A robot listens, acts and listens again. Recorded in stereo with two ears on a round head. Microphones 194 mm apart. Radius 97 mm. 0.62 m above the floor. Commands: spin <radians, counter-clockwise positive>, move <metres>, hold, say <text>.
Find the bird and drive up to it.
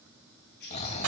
spin 0.96
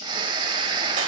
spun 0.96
hold
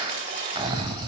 hold
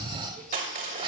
say I heard a bird, but can't make it out now. It was about straight ahead or 70° left. I did not reach it.